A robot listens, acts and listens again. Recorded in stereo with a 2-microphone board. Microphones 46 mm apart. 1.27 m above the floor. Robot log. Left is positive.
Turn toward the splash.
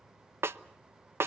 cmd idle
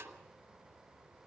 cmd idle
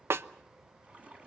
note: The splash: about 30° right or 150° right.
cmd yaw -30
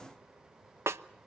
cmd idle
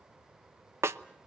end: I heard a splash, but can't make it out now. It was about straight ahead or 120° right.